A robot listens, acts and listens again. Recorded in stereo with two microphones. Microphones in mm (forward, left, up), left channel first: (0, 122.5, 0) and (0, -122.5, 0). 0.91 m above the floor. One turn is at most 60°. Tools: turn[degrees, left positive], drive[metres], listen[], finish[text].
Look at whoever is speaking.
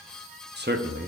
Thought: The man speaking: about 45° right or 135° right.
Action: turn[-45]
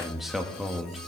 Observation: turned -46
Action: finish[Found it: a man speaking, straight ahead.]